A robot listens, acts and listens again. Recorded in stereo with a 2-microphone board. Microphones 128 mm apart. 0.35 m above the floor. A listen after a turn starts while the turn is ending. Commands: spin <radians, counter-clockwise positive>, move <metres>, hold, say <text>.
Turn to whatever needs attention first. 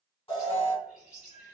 spin 0.70
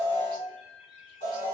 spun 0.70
spin 1.66
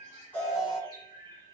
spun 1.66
say Found it: an alarm, straight ahead.